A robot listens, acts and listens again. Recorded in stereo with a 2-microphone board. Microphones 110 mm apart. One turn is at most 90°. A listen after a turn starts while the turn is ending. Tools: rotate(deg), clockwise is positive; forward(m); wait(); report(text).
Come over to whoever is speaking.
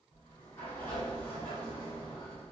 wait()
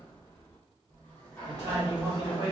rotate(30)
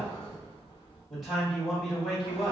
forward(1.0)
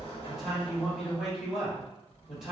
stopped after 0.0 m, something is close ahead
report("Blocked. The man speaking is further on, straight ahead.")